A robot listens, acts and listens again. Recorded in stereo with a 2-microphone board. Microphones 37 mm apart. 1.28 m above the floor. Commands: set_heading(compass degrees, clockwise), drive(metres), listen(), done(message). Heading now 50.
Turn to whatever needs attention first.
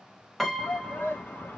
set_heading(350)
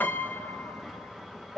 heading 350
done("Found it: a shout, straight ahead.")